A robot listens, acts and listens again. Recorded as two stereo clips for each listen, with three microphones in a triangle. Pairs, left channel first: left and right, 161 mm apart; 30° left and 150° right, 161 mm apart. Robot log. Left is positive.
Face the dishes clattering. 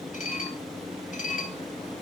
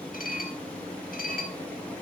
note: The dishes clattering: 55° left.
cmd yaw +55
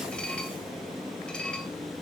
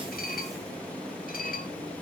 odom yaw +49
end: Found it: dishes clattering, straight ahead, 2 to 4 m away.